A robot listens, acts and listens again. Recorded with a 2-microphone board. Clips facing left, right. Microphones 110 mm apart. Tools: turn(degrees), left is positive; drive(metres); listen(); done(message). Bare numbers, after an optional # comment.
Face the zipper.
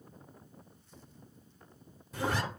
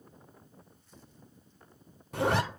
# The zipper: about 65° right or 115° right.
turn(-65)
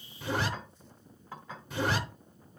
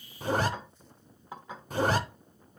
# So it is at 45° right.
turn(-45)
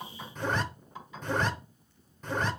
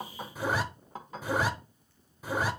# The zipper is now 10° right.
turn(-10)
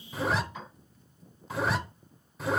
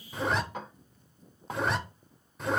done("Facing the zipper.")